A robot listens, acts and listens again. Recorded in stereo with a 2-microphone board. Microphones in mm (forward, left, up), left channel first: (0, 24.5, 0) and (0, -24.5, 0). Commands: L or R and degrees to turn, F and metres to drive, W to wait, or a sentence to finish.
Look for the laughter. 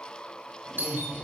R25
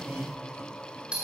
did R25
R125
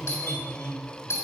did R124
L25
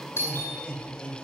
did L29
L15
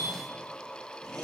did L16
W
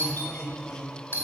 L15
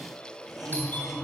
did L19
Facing the laughter, 2 to 4 m away.